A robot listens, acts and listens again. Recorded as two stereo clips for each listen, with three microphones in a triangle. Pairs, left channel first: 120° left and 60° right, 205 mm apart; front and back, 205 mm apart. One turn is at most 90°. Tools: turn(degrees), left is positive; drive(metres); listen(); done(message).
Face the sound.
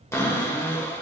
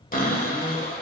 turn(degrees=45)
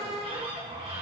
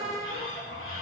done("Facing the cupboard door, 1 to 2 m away.")